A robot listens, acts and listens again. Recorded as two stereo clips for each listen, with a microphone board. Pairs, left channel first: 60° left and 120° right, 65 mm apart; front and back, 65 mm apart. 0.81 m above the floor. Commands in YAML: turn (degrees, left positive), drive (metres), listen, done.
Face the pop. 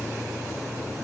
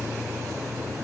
listen: true
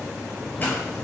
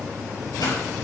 done: "Facing the pop, over 4 m away."